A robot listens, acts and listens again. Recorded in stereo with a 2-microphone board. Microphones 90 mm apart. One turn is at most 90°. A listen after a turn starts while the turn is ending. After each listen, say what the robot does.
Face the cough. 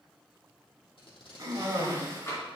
Turn 40° right.
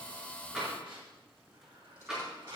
Keep listening.
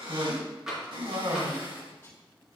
Turn 90° right.
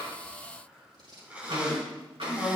Turn 15° right.
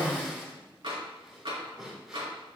Facing the cough.